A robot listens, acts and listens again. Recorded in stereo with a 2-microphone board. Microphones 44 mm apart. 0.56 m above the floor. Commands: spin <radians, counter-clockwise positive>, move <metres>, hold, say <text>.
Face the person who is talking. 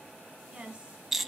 spin -0.35
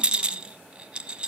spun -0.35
hold
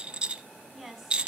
say Found it: a woman speaking, straight ahead.